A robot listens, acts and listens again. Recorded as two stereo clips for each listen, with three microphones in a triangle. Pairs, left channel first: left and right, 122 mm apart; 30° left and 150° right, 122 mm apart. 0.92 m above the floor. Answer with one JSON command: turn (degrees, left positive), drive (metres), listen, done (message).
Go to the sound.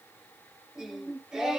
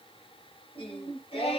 {"drive": 1.0}
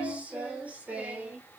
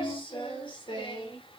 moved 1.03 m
{"turn": -15}
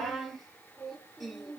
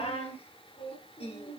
{"drive": 1.0}
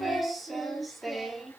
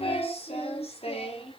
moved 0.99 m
{"drive": 1.0}
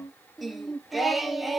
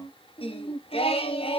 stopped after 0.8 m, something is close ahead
{"done": "Arrived at the singing, straight ahead."}